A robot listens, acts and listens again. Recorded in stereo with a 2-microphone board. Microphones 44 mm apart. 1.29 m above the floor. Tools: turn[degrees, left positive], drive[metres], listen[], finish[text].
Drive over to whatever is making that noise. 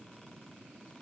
Action: listen[]
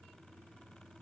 Action: listen[]
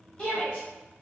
Thought: The shout: about 25° left or 155° left.
Action: turn[25]
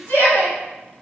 Thought: So it is at 130° left.
Action: turn[130]
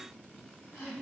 Thought: The shout is now 55° left.
Action: turn[55]
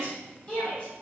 Thought: The shout is now 20° left.
Action: turn[20]
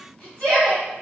Action: drive[1.0]
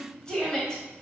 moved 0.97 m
Thought: The shout is now 20° left.
Action: turn[20]
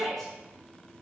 Action: drive[1.0]
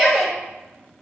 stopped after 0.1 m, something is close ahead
Action: finish[I am next to the shout.]